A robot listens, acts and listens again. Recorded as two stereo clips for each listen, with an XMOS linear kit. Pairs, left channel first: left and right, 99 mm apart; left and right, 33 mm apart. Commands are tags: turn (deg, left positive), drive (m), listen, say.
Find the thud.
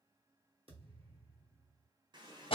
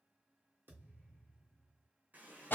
<turn deg="-75"/>
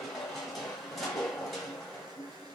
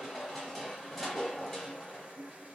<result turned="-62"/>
<listen/>
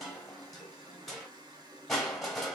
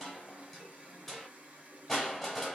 <say>I heard a thud, but can't make it out now. It was about 15° right or 45° right.</say>